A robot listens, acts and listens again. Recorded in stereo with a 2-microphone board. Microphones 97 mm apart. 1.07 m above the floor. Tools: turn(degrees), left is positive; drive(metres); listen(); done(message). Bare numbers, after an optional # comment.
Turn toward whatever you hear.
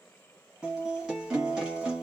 turn(-30)
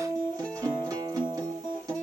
# So it is at 140° right.
turn(-140)
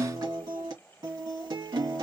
# The guitar is now 45° right.
turn(-45)
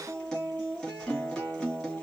done("Facing the guitar, 1 to 2 m away.")